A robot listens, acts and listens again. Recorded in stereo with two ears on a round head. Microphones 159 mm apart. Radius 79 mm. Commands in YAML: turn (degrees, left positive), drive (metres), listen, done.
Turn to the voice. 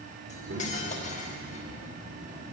turn: -70
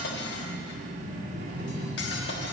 turn: -40
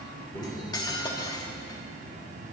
turn: 10
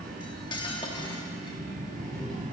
done: "Found it: a child speaking, straight ahead."